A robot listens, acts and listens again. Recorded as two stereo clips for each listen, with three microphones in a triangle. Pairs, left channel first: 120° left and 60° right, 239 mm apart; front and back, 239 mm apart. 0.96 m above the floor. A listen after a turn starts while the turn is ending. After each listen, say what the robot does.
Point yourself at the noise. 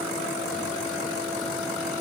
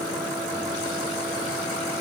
Keep listening.
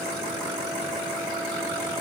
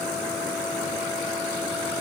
Keep listening.
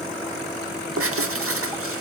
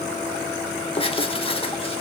Turn 65° right.
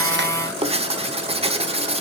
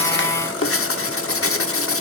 Found it: writing, straight ahead, under 1 m away.